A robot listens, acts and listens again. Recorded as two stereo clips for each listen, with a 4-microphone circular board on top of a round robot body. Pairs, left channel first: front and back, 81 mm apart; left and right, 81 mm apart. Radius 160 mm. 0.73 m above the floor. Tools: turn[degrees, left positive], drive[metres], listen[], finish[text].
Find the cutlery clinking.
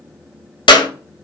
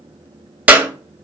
Action: listen[]
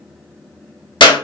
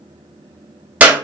Action: listen[]
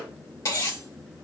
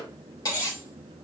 Thought: The cutlery clinking: 45° left.
Action: turn[45]
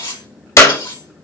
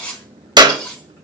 Thought: The cutlery clinking is now 10° left.
Action: turn[10]
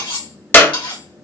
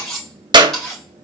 Action: finish[Facing the cutlery clinking, 2 to 4 m away.]